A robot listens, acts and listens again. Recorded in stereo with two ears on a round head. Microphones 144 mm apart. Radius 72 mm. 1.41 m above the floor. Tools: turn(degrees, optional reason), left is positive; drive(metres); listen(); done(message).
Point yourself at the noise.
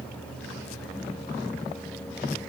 listen()
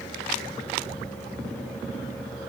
listen()
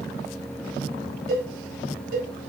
turn(degrees=-60, reason="The cowbell: about 60° right or 120° right.")
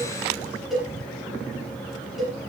done("Facing the cowbell, 2 to 4 m away.")